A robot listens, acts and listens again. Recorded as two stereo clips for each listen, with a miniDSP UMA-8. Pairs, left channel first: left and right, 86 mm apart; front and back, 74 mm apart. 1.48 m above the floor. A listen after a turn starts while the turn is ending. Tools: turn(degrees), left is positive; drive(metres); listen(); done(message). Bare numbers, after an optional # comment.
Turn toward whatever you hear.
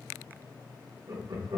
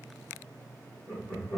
# The laughter: 50° right.
turn(-50)
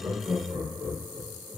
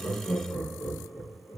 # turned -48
# The laughter is now 20° right.
turn(-20)
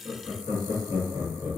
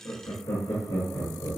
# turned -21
# The laughter is now 10° right.
turn(-10)
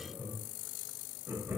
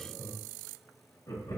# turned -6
# The laughter is now 15° right.
turn(-15)
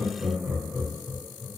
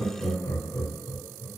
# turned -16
done("Facing the laughter, 2 to 4 m away.")